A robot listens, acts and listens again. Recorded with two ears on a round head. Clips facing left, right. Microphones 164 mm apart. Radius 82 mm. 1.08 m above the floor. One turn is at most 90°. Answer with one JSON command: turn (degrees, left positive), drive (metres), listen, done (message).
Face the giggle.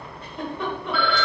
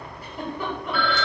{"turn": -30}
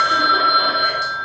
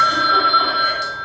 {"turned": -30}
{"listen": true}
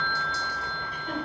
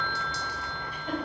{"listen": true}
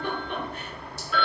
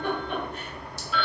{"turn": -90}
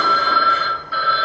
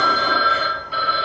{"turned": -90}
{"turn": -55}
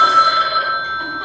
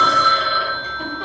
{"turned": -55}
{"listen": true}
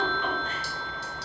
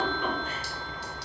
{"done": "Facing where the giggle came from. I can't hear it now."}